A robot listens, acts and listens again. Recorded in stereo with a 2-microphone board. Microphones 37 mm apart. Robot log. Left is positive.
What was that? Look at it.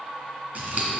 note: The scissors: about 50° right or 130° right.
cmd yaw -50
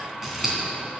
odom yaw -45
note: So it is at 10° right.
cmd yaw -10
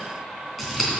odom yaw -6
end: Found it: scissors, straight ahead, 2 to 4 m away.